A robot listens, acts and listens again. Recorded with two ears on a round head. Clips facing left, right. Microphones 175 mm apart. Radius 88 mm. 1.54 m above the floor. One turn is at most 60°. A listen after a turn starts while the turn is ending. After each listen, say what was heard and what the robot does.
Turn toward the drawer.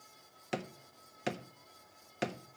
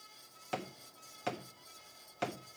The drawer: about 20° left or 160° left. Turn 20° left.
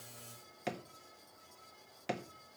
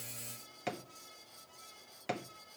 Facing the drawer, 1 to 2 m away.